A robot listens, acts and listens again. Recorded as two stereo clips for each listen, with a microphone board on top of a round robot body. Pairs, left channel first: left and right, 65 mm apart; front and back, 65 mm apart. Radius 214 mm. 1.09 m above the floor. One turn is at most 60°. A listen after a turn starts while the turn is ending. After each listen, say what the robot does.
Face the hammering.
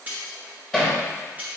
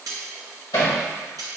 Turn 10° left.
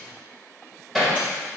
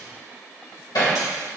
Facing the hammering, 2 to 4 m away.